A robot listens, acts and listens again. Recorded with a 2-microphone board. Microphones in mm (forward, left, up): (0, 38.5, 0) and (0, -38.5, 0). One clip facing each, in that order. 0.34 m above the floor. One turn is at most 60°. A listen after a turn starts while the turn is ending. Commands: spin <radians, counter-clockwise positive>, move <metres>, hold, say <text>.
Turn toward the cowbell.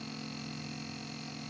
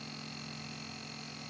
hold
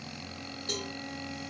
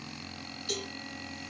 spin 0.61
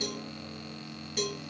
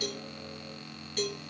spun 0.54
spin 0.17
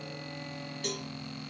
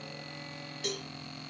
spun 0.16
say Facing the cowbell.